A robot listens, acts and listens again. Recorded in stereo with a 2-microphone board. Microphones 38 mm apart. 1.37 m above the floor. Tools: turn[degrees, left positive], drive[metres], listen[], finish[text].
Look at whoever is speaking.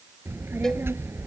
Action: turn[-90]
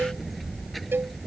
Action: finish[Facing the child speaking.]